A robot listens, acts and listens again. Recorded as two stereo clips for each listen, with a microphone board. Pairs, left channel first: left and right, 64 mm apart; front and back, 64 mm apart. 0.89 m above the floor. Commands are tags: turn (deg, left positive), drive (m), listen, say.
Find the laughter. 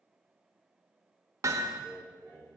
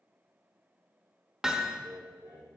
<turn deg="125"/>
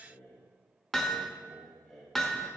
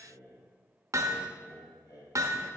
<say>Facing the laughter.</say>